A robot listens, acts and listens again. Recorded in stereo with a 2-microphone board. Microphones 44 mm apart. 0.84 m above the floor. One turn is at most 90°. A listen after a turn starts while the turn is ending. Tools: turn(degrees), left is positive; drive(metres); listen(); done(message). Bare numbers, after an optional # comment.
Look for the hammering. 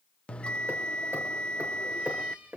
turn(-90)
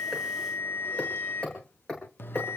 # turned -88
# So it is at 10° left.
turn(10)
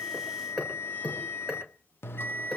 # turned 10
done("Facing the hammering.")